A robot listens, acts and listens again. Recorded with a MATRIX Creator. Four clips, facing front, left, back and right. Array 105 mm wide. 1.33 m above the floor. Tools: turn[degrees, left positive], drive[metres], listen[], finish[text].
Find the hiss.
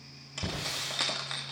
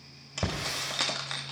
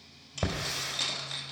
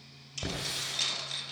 Thought: The hiss: 140° left.
Action: turn[140]
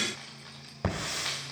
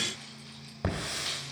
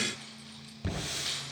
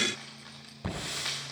Thought: The hiss is now 30° left.
Action: turn[30]
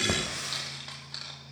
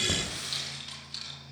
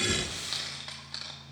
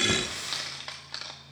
Thought: The hiss is now 15° right.
Action: turn[-15]
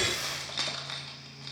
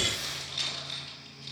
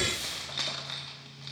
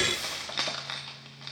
Action: finish[Facing the hiss.]